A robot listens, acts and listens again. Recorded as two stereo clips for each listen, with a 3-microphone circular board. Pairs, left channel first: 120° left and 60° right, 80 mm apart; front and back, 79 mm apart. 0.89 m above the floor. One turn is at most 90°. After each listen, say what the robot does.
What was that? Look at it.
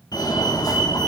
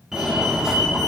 Turn 90° left.
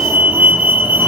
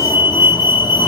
Turn 10° left.
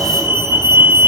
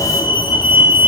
Found it: a fire alarm, straight ahead, 2 to 4 m away.